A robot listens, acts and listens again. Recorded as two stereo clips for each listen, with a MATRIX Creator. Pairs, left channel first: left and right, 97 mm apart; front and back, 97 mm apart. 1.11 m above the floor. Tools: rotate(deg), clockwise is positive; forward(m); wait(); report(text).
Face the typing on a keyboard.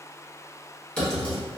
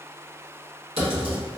rotate(-165)
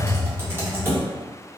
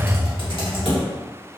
rotate(25)
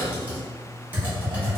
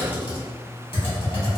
rotate(20)
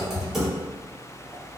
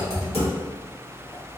report("Found it: typing on a keyboard, straight ahead, 1 to 2 m away.")